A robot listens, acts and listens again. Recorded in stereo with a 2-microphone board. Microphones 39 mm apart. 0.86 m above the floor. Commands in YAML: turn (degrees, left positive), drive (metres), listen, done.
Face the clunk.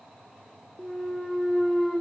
turn: 30
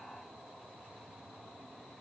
listen: true
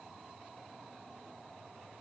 done: "I heard a clunk, but can't make it out now. It was about 25° right or 145° left."